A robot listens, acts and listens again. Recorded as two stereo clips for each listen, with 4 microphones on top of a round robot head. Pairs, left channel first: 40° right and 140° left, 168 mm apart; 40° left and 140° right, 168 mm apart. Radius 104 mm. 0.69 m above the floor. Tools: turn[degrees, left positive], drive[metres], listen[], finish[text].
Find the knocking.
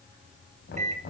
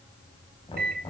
Thought: The knocking: 20° right.
Action: turn[-20]
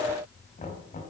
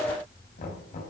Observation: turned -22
Action: finish[Facing the knocking.]